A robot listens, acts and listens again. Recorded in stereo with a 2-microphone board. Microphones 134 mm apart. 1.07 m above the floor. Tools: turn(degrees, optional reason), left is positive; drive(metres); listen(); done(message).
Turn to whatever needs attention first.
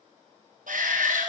turn(degrees=-90)
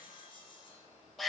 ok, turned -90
done("Found it: a shout, straight ahead.")